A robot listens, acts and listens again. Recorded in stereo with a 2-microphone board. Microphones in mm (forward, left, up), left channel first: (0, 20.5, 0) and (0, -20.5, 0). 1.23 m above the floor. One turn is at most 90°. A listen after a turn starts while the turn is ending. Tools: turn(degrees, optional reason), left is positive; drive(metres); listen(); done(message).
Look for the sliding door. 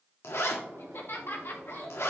turn(degrees=-90)
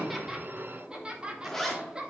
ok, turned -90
listen()
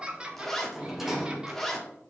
done("Facing the sliding door, 1 to 2 m away.")